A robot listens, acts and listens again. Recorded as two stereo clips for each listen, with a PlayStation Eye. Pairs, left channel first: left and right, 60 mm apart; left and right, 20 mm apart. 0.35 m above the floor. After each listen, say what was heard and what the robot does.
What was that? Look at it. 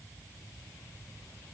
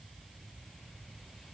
Keep listening.
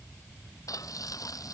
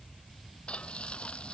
The frying: about 70° left or 110° left. Turn 70° left.
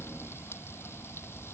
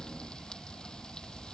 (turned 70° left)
Keep listening.
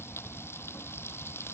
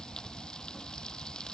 So it is at 40° left. Turn 40° left.
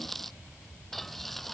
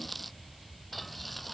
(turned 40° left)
Facing the frying.